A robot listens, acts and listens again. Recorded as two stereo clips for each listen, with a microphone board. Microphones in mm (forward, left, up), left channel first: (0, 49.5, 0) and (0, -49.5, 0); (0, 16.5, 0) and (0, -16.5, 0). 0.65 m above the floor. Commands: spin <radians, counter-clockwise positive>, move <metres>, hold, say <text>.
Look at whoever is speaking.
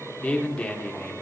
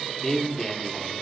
spin 0.52
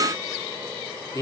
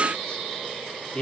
spin 2.44
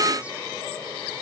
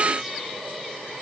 hold
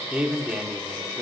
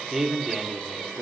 spin -0.26
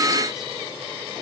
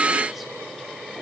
hold
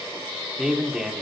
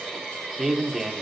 say Facing the man speaking.